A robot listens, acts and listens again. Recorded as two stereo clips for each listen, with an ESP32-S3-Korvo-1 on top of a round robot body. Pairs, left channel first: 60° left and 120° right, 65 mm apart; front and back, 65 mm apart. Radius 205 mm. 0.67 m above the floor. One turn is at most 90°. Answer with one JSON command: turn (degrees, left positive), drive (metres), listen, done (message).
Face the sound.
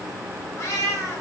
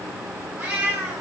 {"turn": 90}
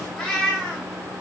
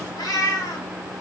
{"turn": -20}
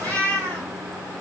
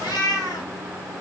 {"turn": -20}
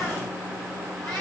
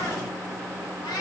{"turn": -20}
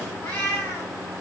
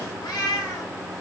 {"done": "Facing the cat meowing."}